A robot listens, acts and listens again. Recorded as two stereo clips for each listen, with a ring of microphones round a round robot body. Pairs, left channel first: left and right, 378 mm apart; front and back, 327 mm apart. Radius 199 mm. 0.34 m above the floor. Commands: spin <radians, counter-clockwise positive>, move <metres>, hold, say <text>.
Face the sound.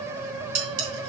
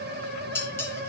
spin -1.48
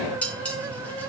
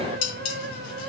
say Facing the dishes clattering, 2 to 4 m away.